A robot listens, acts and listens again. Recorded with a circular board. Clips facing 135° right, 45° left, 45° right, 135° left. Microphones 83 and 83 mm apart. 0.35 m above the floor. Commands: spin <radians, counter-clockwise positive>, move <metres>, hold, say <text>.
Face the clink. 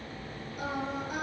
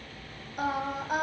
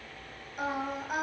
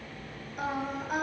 hold
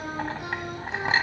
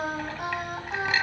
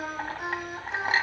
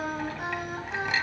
spin -1.48
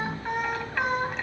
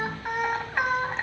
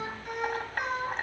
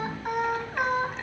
spin -0.17
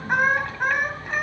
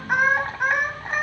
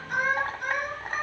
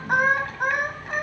hold
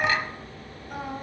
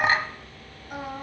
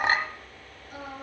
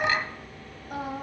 say Found it: a clink, straight ahead, 1 to 2 m away.